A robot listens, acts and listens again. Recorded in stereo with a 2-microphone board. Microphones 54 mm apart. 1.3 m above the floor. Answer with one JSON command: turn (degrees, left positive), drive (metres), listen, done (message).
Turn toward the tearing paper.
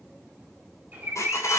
{"turn": 90}
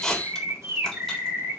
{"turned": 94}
{"done": "Facing the tearing paper."}